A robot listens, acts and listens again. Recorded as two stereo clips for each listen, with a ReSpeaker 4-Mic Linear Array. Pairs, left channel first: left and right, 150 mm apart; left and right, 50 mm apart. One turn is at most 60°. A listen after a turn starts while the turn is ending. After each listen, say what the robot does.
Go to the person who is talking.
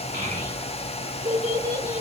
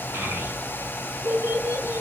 Turn 60° right.
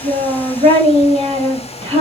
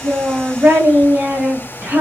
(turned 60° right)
Turn 45° right.
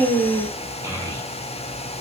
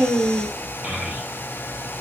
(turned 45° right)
Turn 25° right.
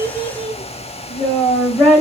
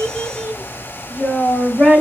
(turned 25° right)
Drive 1.0 m forward.
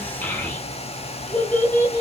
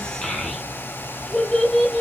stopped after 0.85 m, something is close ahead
Turn 15° left.
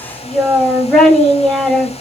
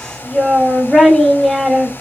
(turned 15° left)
Arrived at the child speaking, straight ahead.